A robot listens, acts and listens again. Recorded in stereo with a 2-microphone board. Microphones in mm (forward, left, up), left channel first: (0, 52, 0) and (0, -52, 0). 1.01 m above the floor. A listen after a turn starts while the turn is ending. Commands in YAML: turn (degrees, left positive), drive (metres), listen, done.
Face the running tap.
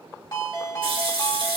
turn: -55
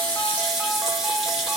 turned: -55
done: "Found it: a running tap, straight ahead, 1 to 2 m away."